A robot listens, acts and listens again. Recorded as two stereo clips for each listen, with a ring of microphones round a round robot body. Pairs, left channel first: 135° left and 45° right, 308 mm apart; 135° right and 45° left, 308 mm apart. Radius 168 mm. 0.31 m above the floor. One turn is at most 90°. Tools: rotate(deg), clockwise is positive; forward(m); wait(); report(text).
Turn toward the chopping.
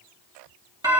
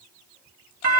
wait()
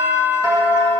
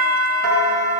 wait()
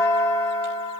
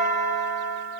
report("I can't make out chopping to turn to.")